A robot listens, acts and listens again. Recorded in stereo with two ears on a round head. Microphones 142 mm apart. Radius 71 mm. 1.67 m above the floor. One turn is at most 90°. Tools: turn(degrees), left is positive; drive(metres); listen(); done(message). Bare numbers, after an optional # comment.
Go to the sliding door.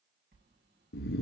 # The sliding door: about 65° right or 115° right.
turn(-65)
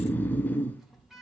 drive(1.0)
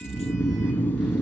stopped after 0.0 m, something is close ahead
listen()
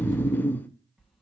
done("Blocked. The sliding door is further on, straight ahead.")